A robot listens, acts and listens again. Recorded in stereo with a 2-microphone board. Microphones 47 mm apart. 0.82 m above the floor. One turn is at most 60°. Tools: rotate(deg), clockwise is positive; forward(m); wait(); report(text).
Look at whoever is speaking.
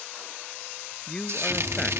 rotate(-15)
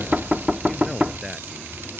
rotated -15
wait()
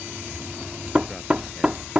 wait()
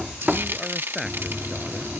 report("I heard a man speaking, but can't make it out now. It was about straight ahead or 150° left.")